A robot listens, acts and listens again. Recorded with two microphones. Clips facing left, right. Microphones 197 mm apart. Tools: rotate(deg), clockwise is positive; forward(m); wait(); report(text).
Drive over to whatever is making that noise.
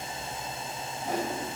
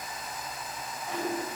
rotate(-40)
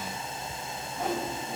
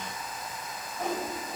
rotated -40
forward(1.0)
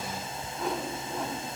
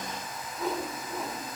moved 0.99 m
forward(1.0)
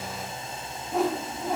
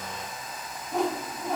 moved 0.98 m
forward(1.0)
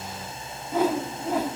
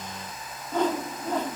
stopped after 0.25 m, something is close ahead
rotate(-10)
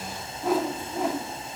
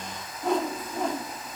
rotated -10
report("I am next to the whoosh.")